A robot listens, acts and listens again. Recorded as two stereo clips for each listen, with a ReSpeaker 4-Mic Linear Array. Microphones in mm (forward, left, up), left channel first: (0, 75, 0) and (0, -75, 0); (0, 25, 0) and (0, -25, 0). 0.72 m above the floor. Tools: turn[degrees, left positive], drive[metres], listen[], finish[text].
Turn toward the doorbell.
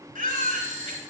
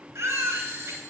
Thought: The doorbell: about 60° right or 120° right.
Action: turn[-60]
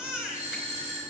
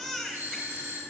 Thought: So it is at 55° right.
Action: turn[-55]
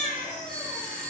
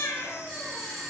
Action: finish[Found it: a doorbell, straight ahead, 2 to 4 m away.]